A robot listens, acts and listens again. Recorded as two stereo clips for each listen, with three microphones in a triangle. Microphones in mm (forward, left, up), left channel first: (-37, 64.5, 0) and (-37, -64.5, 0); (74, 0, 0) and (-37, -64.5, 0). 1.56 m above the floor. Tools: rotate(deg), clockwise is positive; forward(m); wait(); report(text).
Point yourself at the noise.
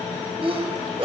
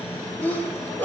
rotate(45)
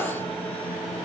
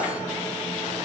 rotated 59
rotate(-15)
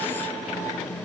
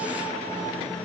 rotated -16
report("Facing where the sneeze came from. I can't hear it now.")